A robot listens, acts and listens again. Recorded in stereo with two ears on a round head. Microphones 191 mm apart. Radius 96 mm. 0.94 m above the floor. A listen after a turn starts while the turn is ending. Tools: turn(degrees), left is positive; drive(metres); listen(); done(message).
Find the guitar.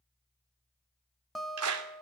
turn(degrees=30)
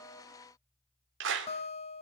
turn(degrees=150)
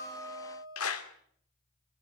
turn(degrees=-20)
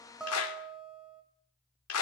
done("Found it: a guitar, straight ahead.")